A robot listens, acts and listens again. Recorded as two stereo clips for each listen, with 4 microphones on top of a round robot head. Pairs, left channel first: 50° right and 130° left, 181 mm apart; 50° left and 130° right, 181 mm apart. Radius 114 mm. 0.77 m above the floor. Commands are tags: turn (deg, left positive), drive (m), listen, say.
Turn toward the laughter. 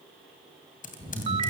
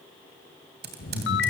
<turn deg="15"/>
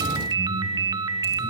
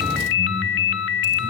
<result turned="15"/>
<listen/>
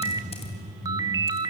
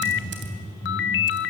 <turn deg="-10"/>
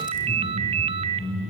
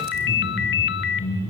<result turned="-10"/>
<turn deg="-10"/>
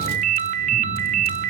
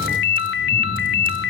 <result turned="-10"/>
<listen/>
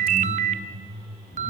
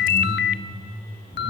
<turn deg="-10"/>
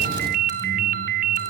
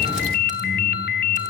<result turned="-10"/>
<listen/>
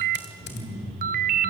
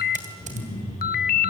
<say>Found it: laughter, straight ahead.</say>